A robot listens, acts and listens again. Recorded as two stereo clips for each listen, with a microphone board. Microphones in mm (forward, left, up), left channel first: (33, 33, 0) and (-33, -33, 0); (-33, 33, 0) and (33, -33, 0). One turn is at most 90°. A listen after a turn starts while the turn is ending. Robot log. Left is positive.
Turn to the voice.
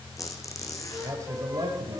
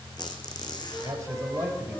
note: The man speaking: 110° right.
cmd yaw -90
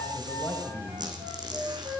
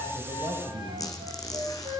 note: The man speaking is now 50° right.
cmd yaw -50
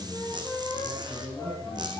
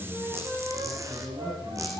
end: Found it: a man speaking, straight ahead, 2 to 4 m away.